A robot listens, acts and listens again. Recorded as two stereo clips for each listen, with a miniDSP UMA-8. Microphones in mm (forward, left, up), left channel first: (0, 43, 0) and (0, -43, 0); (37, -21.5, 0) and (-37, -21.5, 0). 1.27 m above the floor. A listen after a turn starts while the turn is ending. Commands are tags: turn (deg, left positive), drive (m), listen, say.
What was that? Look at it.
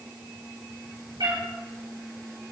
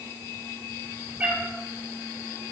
<turn deg="-115"/>
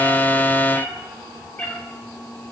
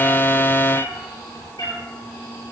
<turn deg="20"/>
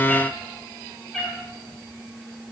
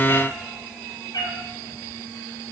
<say>Facing the cat meowing, 2 to 4 m away.</say>